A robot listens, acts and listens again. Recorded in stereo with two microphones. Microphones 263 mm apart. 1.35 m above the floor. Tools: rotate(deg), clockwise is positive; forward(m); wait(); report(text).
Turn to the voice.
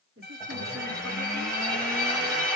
rotate(55)
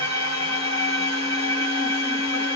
wait()
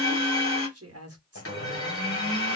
rotate(65)
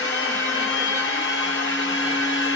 wait()
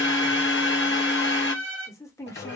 rotate(-10)
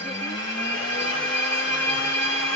wait()
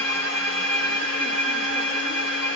wait()
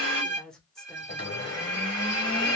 report("Found it: a woman speaking, straight ahead.")